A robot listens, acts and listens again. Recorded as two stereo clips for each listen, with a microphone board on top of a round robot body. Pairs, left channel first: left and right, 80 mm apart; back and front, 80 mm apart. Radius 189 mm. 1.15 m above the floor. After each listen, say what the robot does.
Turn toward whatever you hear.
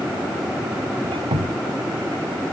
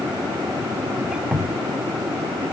Turn 80° right.
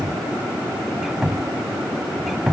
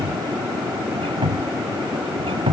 Facing the squeak.